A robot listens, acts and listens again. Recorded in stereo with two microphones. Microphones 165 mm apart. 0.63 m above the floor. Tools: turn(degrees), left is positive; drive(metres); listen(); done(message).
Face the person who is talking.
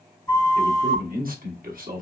turn(degrees=-55)
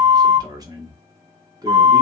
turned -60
turn(degrees=-25)
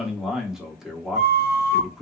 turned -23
done("Found it: a man speaking, straight ahead.")